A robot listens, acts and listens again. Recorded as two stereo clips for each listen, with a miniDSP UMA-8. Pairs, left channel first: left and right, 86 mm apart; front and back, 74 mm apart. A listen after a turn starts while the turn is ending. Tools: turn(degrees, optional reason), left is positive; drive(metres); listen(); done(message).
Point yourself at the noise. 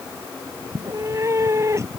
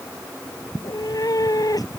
turn(degrees=-35, reason="The cat meowing: 35° right.")
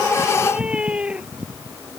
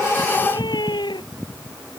turn(degrees=-10, reason="The cat meowing is now 10° right.")
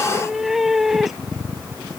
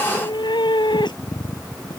done("Facing the cat meowing.")